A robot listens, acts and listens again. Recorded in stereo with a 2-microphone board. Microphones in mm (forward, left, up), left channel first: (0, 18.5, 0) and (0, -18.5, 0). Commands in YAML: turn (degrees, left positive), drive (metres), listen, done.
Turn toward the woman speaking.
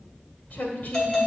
turn: 45
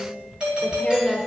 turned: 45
done: "Facing the woman speaking."